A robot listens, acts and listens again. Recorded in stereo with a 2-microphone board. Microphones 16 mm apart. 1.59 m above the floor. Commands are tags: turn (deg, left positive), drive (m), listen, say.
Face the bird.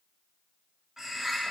<turn deg="-30"/>
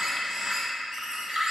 <turn deg="-115"/>
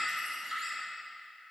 <say>Found it: a bird, straight ahead.</say>